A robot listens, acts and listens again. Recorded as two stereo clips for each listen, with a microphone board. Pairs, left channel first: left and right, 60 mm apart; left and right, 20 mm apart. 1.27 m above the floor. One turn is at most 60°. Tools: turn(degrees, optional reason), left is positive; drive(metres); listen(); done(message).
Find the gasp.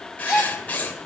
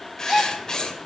turn(degrees=-30)
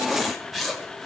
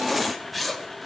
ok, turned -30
listen()
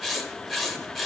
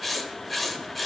done("I heard a gasp, but can't make it out now. It was about 20° left or 140° right.")